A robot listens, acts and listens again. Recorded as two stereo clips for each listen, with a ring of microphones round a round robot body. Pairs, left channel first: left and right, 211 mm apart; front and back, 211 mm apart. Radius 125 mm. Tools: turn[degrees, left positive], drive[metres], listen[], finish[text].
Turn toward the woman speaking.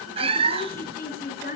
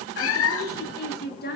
Thought: The woman speaking: 40° left.
Action: turn[40]
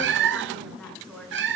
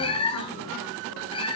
Action: listen[]
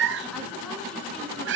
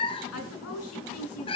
Action: listen[]
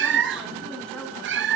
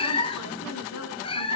Action: finish[Facing where the woman speaking came from. I can't hear it now.]